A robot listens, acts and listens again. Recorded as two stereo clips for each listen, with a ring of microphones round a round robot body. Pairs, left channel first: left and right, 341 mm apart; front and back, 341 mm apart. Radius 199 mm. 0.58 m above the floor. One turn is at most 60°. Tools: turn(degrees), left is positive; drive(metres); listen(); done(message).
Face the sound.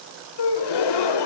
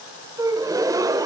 turn(degrees=60)
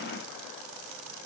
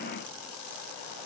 turn(degrees=40)
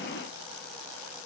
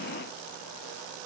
done("Facing where the gasp came from. I can't hear it now.")